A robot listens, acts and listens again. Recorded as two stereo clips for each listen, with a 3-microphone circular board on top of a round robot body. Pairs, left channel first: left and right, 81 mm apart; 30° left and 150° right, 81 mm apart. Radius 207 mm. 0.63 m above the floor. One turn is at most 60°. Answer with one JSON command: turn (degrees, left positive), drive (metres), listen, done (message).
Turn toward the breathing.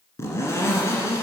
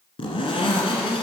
{"listen": true}
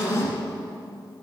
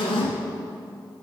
{"listen": true}
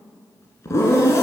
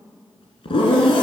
{"done": "I can't make out breathing, only a zipper."}